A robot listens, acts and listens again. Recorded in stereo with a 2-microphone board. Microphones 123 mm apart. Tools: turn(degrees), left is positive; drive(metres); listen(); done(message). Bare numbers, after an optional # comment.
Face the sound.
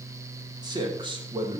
# The man speaking: about 50° right or 130° right.
turn(-50)
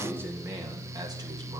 # So it is at 25° right.
turn(-25)
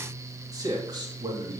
# The man speaking is now 35° right.
turn(-35)
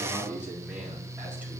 # The man speaking is now 10° right.
turn(-10)
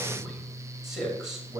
done("Found it: a man speaking, straight ahead.")